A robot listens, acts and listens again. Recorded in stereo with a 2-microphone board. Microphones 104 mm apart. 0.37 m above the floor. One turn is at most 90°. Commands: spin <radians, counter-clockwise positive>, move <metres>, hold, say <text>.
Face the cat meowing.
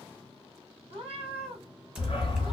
spin -1.13
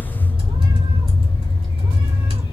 hold
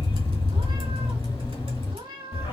spin -0.87
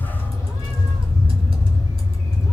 hold
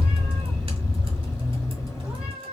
spin -0.26
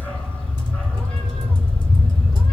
hold
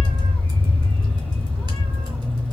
hold
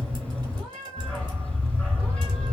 say Facing the cat meowing, 2 to 4 m away.